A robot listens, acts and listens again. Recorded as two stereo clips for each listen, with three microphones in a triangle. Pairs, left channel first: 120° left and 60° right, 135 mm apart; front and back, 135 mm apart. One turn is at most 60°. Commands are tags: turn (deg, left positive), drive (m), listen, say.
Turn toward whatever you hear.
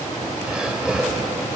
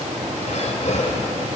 <turn deg="25"/>
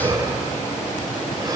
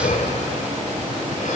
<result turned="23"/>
<say>Facing the breathing, 2 to 4 m away.</say>